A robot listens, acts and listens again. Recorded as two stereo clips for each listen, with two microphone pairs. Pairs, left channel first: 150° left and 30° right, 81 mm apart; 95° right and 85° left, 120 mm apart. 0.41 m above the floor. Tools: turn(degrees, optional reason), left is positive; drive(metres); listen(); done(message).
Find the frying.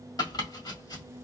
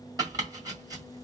listen()
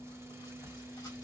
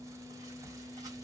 listen()
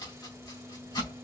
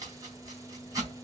done("I can't make out frying to turn to.")